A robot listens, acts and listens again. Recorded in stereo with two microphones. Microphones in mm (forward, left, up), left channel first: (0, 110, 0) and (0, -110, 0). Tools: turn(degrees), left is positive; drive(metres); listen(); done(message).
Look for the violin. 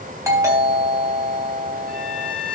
turn(degrees=-45)
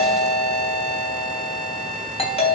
listen()
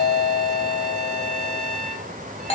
done("Found it: a violin, straight ahead.")